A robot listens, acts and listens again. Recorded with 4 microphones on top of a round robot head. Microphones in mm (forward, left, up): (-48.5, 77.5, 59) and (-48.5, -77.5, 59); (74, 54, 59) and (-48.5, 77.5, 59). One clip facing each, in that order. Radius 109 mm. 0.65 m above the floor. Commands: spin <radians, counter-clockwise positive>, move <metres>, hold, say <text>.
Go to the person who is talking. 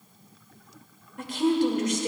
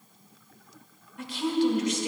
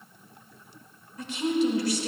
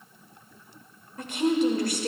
spin 2.27
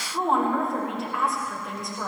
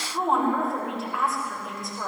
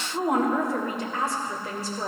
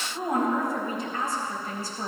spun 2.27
move 1.0
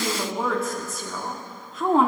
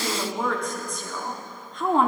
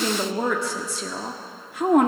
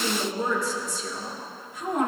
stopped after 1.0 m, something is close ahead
say I am next to the woman speaking.